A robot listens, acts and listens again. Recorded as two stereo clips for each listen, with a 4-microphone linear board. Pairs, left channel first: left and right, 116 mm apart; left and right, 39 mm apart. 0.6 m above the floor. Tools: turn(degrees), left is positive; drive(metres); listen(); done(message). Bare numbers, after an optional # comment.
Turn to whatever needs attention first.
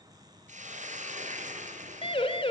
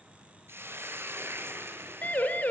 # The siren: about 45° left or 135° left.
turn(45)
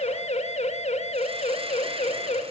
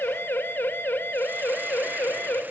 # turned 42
# So it is at 85° left.
turn(85)
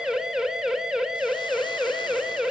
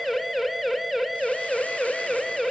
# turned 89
done("Facing the siren.")